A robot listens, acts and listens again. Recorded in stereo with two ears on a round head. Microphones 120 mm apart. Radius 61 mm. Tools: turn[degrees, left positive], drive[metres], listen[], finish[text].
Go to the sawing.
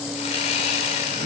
Thought: The sawing: about 45° left or 135° left.
Action: turn[45]
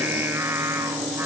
Action: listen[]
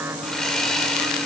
Action: drive[1.0]
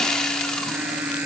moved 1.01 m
Action: drive[1.0]
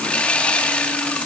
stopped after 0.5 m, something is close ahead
Thought: The sawing is now 10° left.
Action: turn[10]
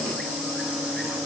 Action: listen[]
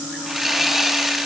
Action: finish[I am next to the sawing.]